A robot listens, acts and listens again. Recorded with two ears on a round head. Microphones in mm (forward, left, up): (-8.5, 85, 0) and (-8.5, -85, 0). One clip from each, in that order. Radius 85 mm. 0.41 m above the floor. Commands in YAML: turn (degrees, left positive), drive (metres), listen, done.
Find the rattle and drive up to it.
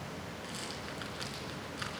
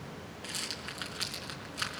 turn: -25
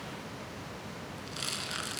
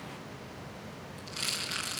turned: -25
drive: 1.0
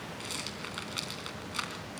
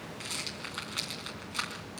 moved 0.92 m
drive: 1.0
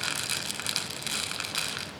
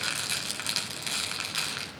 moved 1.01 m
drive: 1.0
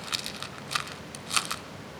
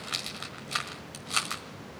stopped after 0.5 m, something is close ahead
turn: 15
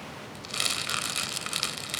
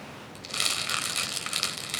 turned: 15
done: "Arrived at the rattle, straight ahead."